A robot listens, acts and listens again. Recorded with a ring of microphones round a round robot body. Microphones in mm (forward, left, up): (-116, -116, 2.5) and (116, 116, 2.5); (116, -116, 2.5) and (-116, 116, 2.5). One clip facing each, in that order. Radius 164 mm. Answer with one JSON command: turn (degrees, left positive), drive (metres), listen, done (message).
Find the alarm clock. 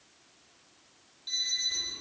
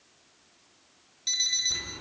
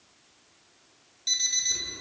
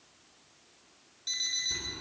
{"turn": 30}
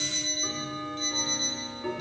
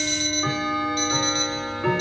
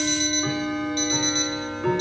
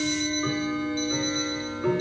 {"done": "Facing the alarm clock."}